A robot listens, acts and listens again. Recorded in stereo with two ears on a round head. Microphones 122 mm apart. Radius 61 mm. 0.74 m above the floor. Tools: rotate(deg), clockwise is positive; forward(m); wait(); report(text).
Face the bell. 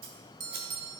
rotate(35)
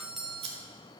report("Found it: a bell, straight ahead.")